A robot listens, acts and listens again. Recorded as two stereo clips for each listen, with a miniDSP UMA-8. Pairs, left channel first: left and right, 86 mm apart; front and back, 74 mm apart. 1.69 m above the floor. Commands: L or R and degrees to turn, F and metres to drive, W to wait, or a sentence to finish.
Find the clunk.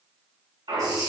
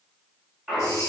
R95
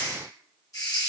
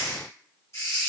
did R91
I heard a clunk from this way, but can't make it out now.